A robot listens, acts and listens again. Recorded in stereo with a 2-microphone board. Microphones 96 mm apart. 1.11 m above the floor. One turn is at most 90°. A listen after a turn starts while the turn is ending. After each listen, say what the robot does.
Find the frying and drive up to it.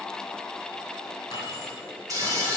Turn 35° right.
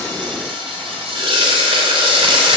Turn 90° right.
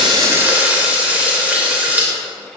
Turn 15° right.
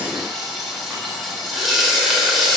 Drive 1.0 m forward.
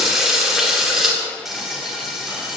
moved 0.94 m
Drive 1.0 m forward.
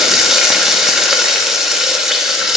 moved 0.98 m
Drive 1.0 m forward.
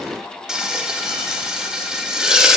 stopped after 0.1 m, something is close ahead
Turn 10° right.
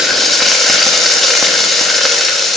I am next to the frying.